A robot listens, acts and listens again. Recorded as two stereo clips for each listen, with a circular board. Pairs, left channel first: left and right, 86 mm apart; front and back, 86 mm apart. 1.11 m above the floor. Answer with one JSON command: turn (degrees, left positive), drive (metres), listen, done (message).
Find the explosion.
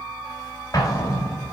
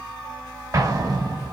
{"turn": 135}
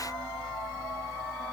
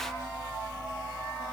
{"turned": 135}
{"done": "Facing where the explosion came from. I can't hear it now."}